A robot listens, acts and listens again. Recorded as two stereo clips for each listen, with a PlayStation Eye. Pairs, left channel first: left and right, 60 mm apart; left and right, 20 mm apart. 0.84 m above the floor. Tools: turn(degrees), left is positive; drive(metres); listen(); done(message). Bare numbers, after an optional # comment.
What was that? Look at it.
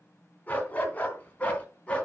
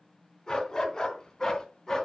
# The dog barking: about 20° left or 160° left.
turn(20)
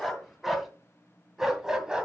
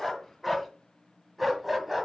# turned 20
# So it is at 15° right.
turn(-15)
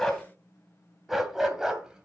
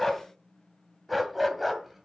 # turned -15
# The dog barking is now 10° right.
turn(-10)
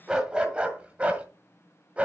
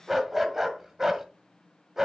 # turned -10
# The dog barking is now 20° right.
turn(-20)
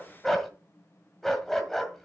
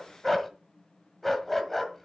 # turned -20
done("Found it: a dog barking, straight ahead, 1 to 2 m away.")